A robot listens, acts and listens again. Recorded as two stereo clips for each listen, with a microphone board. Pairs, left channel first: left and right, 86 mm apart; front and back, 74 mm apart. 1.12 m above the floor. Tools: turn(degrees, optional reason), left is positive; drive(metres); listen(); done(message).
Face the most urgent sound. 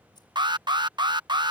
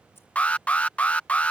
turn(degrees=-70, reason="The alarm: 70° right.")
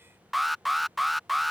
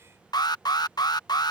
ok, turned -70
done("Found it: an alarm, straight ahead.")